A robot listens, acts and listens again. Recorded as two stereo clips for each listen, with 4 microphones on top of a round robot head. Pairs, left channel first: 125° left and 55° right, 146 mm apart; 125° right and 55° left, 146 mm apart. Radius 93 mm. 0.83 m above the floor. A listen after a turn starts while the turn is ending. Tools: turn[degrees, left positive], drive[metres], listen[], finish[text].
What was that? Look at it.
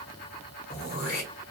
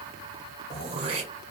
Thought: The throat clearing: 105° left.
Action: turn[105]
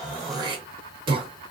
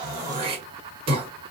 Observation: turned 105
Action: finish[Facing the throat clearing, 1 to 2 m away.]